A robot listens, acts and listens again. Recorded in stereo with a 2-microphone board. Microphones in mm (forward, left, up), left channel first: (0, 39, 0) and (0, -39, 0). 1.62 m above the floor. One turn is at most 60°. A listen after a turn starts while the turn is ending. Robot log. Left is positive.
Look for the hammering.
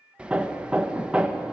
note: The hammering: about 15° right or 165° right.
cmd yaw -15
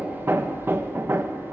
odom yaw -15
note: So it is at 150° right.
cmd yaw -60
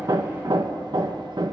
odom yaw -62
note: The hammering is now 85° right.
cmd yaw -60
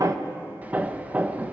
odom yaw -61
note: The hammering is now 25° right.
cmd yaw -25
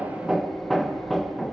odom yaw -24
end: Found it: hammering, straight ahead, 1 to 2 m away.